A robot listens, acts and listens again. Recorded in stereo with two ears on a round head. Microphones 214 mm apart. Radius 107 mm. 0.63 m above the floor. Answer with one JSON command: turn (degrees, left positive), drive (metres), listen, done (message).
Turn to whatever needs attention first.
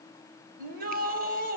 {"turn": -40}
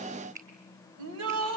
{"turn": -100}
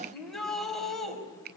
{"done": "Found it: a shout, straight ahead, 2 to 4 m away."}